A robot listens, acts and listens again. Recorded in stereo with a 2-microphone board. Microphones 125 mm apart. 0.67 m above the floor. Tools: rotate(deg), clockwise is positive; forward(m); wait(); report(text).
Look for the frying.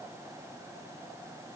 wait()
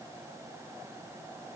wait()
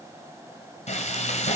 rotate(-70)
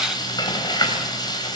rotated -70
rotate(-35)
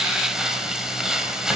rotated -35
report("Found it: frying, straight ahead, 2 to 4 m away.")